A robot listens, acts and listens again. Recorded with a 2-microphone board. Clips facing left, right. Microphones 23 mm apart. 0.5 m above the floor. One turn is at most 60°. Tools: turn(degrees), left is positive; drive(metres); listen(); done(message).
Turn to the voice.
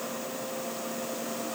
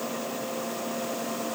listen()
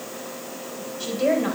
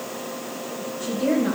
turn(degrees=60)
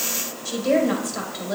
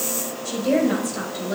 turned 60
turn(degrees=40)
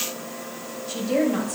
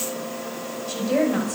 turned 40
done("Facing the woman speaking, 2 to 4 m away.")